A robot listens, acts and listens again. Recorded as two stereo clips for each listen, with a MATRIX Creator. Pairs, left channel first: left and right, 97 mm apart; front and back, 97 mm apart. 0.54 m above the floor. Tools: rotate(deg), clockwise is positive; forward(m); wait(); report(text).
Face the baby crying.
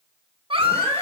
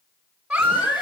rotate(100)
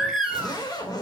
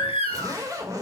report("Found it: a baby crying, straight ahead, 1 to 2 m away.")